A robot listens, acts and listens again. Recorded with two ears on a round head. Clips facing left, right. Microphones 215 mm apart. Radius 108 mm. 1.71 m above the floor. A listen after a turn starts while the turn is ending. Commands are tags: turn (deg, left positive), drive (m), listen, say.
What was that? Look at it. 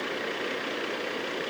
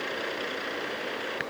<listen/>
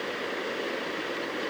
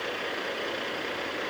<listen/>
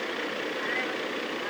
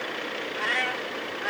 <turn deg="-70"/>
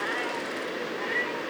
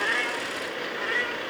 <turn deg="-15"/>
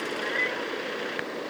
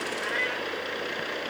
<turn deg="-10"/>
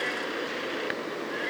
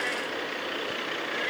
<listen/>
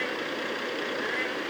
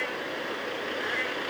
<say>Found it: a cat meowing, straight ahead.</say>